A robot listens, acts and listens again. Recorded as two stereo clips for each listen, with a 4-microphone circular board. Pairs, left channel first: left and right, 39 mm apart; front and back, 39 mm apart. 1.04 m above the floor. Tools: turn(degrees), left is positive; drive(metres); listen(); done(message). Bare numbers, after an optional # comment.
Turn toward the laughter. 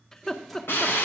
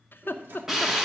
# The laughter: 15° left.
turn(15)
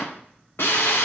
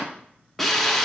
listen()
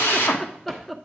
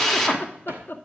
done("Facing the laughter, under 1 m away.")